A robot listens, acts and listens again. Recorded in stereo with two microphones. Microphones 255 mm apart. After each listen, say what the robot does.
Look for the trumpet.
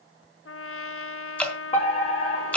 Turn 60° left.
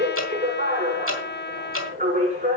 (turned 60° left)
Turn 50° left.
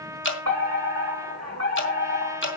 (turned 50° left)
Turn 15° right.
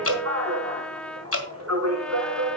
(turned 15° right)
Facing the trumpet, under 1 m away.